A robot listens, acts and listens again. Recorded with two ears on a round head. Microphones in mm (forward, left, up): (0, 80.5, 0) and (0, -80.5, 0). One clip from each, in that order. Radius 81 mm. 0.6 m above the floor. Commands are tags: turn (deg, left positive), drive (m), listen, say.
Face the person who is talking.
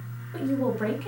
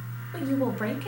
<turn deg="-20"/>
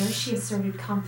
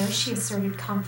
<turn deg="-140"/>
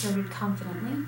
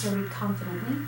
<say>Facing the woman speaking.</say>